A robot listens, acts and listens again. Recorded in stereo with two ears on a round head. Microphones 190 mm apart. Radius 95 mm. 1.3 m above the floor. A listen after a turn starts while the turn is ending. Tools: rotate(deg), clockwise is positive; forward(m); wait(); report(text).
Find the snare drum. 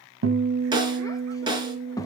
rotate(20)
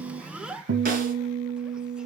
wait()
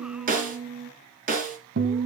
rotate(135)
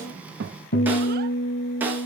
rotate(10)
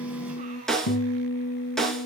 report("Facing the snare drum.")